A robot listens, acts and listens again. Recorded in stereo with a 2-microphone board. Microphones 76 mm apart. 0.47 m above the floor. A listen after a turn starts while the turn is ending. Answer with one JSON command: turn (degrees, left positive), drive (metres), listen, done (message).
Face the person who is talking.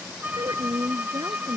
{"turn": -70}
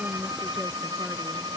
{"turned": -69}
{"listen": true}
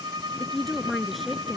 {"done": "Facing the woman speaking."}